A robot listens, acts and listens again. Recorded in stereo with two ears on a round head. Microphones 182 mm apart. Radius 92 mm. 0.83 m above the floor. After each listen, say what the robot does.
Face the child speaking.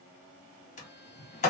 Keep listening.
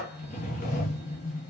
Keep listening.
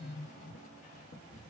I can't make out a child speaking to turn to.